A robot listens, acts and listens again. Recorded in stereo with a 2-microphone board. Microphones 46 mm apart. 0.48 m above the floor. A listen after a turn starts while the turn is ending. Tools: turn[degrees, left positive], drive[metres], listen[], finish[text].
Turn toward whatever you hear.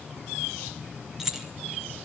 Action: turn[-30]
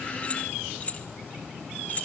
Thought: So it is at 35° left.
Action: turn[35]
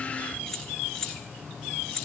Thought: The keys jangling is now 15° left.
Action: turn[15]
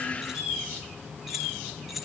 Action: finish[Found it: keys jangling, straight ahead, over 4 m away.]